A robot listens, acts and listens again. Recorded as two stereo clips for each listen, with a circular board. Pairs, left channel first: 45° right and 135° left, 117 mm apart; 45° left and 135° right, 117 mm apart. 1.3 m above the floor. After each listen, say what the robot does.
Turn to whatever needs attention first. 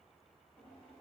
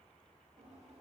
Keep listening.
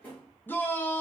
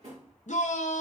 Turn 30° left.
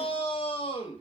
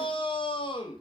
Found it: a shout, straight ahead, under 1 m away.